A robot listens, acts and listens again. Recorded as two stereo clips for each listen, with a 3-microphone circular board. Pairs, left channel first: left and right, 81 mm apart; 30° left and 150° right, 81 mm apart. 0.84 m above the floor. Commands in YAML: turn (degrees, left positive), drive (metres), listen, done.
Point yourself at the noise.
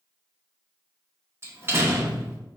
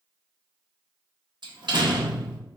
turn: -145
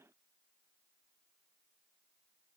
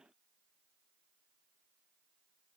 done: "I heard a door slam from this way, but can't make it out now."